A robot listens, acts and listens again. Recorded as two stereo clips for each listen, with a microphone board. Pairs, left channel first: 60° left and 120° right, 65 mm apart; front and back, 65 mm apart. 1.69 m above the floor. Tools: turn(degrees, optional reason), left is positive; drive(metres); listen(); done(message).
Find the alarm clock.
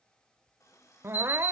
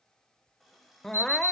turn(degrees=45, reason="The alarm clock: 45° left.")
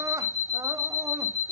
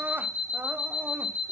done("Found it: an alarm clock, straight ahead, over 4 m away.")